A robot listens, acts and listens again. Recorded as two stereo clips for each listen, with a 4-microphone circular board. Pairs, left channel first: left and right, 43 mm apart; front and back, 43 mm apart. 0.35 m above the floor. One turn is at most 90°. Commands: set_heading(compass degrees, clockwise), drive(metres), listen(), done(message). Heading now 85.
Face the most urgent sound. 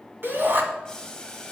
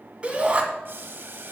set_heading(175)
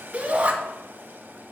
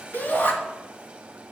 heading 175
set_heading(210)
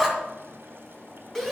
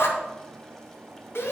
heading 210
set_heading(200)
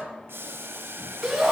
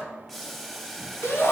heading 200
done("Found it: a shout, straight ahead, 2 to 4 m away.")